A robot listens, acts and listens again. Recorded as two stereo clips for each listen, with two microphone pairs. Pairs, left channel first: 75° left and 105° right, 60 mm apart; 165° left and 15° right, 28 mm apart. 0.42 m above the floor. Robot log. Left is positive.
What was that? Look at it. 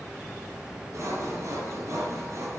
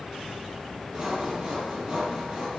note: The sawing: 70° right.
cmd yaw -70
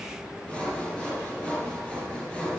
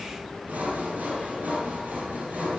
end: Found it: sawing, straight ahead, 2 to 4 m away.